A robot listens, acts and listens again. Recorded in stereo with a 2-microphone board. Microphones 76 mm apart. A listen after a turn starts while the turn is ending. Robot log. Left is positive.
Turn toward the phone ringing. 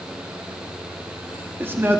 cmd idle
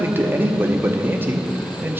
cmd idle
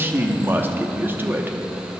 end: I can't make out a phone ringing, only a man speaking.